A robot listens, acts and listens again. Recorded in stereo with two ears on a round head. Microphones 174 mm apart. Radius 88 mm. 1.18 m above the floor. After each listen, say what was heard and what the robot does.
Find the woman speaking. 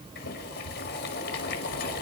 Keep listening.
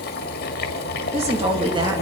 The woman speaking: about 20° right or 160° right. Turn 20° right.
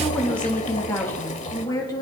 So it is at 20° left. Turn 20° left.
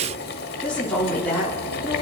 The woman speaking is now 10° left. Turn 10° left.
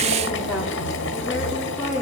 Found it: a woman speaking, straight ahead.